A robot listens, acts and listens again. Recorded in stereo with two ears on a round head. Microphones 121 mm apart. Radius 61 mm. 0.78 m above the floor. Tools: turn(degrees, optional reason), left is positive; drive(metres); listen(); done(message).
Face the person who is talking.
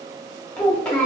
turn(degrees=30)
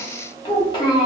turn(degrees=140, reason="So it is at 140° left.")
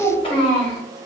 turn(degrees=40, reason="The child speaking is now 40° left.")
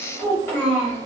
turn(degrees=15, reason="The child speaking is now 15° left.")
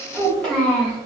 done("Facing the child speaking.")